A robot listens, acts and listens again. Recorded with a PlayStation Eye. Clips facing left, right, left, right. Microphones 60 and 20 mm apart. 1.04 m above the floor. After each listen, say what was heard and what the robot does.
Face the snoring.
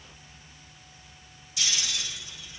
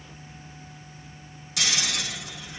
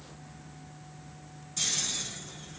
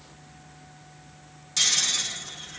Turn 90° right.
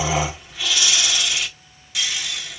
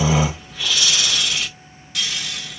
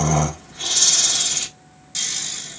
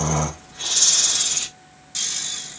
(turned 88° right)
Facing the snoring, 1 to 2 m away.